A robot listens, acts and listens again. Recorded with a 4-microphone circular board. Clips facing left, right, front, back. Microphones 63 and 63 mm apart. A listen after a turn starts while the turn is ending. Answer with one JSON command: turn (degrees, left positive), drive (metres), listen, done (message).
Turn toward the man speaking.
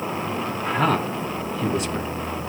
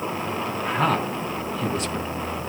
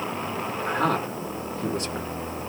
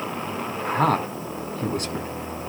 {"turn": 180}
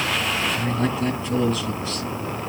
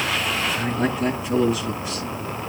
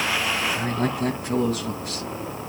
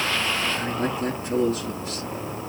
{"turn": -10}
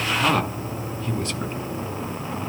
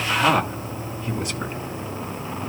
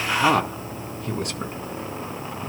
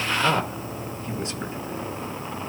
{"turn": -10}
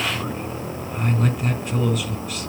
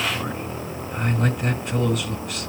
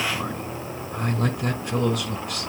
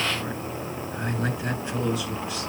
{"done": "Found it: a man speaking, straight ahead, 2 to 4 m away."}